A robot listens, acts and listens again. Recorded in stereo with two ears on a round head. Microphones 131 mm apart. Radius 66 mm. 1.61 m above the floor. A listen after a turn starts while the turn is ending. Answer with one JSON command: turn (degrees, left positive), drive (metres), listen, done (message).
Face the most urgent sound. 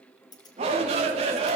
{"turn": -45}
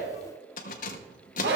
{"turn": -90}
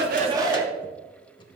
{"turn": -25}
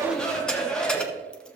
{"done": "Found it: a shout, straight ahead."}